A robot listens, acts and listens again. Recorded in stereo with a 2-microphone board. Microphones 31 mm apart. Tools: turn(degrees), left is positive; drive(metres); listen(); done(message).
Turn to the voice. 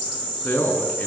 turn(degrees=65)
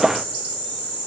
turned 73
listen()
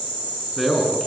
done("Found it: a man speaking, straight ahead.")